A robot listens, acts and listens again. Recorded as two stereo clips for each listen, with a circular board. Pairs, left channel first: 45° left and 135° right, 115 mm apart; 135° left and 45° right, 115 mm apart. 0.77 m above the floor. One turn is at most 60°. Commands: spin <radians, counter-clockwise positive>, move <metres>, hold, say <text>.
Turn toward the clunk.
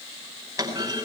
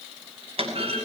spin -1.05
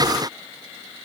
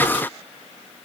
spin -0.26
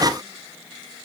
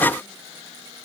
say Facing where the clunk came from. I can't hear it now.